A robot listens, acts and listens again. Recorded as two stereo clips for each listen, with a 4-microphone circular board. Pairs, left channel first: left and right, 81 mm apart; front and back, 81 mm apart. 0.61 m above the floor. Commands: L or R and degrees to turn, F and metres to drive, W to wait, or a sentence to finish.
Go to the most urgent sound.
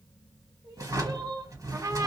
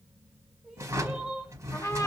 R95
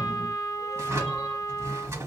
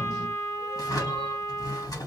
W
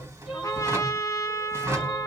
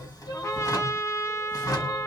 F1.0
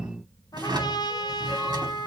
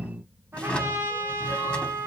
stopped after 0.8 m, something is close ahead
W
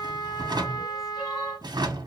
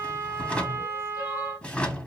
W
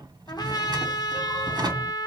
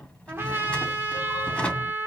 Facing where the crying came from. I can't hear it now. I did not reach it.